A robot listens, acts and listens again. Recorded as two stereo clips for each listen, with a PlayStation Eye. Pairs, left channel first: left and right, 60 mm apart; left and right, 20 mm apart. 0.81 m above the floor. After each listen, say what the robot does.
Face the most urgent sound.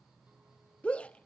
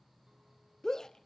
Turn 20° left.
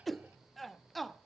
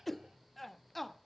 Found it: a shout, straight ahead, under 1 m away.